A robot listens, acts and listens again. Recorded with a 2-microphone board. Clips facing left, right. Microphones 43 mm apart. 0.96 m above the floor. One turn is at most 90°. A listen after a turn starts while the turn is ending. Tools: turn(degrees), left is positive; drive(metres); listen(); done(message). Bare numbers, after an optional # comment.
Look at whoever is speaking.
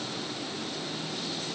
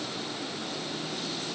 listen()
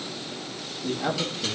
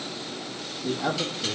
# The man speaking: about 15° left or 165° left.
turn(15)
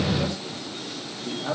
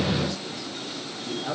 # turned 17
# So it is at 140° left.
turn(90)
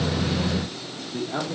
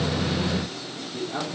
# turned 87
# The man speaking is now 40° left.
turn(40)
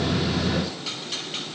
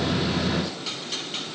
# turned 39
listen()
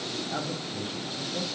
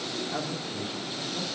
done("Facing the man speaking.")